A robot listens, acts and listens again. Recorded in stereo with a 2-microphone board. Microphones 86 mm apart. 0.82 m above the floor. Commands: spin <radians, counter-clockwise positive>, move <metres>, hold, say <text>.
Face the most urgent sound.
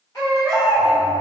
spin 0.79
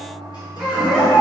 say Facing the baby crying.